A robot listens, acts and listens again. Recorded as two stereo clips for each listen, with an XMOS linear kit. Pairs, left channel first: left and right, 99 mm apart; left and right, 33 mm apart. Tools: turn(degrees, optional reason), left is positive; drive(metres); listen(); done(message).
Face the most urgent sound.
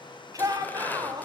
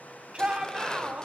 turn(degrees=-35, reason="The shout: about 35° right or 145° right.")
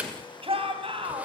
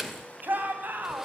turn(degrees=-105, reason="So it is at 105° right.")
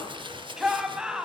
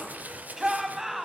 done("Facing the shout.")